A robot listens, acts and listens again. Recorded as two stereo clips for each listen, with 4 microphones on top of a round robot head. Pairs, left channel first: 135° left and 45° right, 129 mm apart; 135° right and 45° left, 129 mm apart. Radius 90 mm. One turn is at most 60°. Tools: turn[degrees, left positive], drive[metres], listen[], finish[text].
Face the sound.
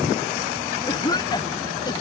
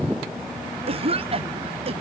Thought: The cough: 80° left.
Action: turn[60]
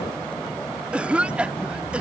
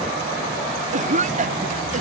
Thought: The cough is now 40° left.
Action: turn[40]
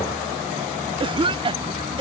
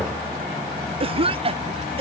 Action: finish[Found it: a cough, straight ahead.]